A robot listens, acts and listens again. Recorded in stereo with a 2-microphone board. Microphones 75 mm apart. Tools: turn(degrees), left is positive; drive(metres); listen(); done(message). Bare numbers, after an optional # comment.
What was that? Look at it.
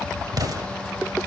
# The explosion: about 60° right or 120° right.
turn(-60)
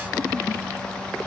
listen()
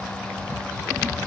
done("I heard an explosion, but can't make it out now. It was about straight ahead or 60° right.")